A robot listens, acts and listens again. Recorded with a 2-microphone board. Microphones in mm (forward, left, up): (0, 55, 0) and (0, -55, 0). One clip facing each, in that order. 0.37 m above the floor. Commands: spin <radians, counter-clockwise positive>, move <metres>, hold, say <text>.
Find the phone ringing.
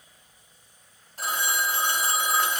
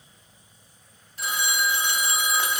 spin 0.79
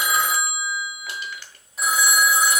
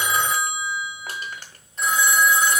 say Found it: a phone ringing, straight ahead.